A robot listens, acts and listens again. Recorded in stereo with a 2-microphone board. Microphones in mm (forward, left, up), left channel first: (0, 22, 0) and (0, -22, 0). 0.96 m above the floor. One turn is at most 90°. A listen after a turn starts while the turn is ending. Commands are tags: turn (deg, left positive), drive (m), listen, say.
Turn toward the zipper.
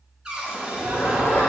<turn deg="65"/>
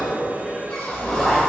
<say>Found it: a zipper, straight ahead.</say>